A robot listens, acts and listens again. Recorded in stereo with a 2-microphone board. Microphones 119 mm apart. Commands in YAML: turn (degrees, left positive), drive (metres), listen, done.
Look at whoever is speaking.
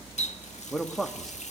turn: 30
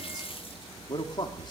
turn: 140
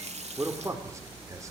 turn: -25
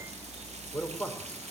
turn: 10
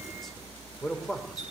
done: "Facing the man speaking, over 4 m away."